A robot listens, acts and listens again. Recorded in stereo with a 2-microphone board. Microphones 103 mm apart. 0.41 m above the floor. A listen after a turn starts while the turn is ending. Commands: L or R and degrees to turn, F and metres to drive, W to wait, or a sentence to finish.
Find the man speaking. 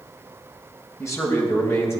L25
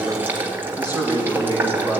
L40
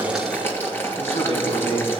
L110
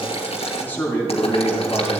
L15
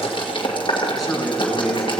Facing the man speaking.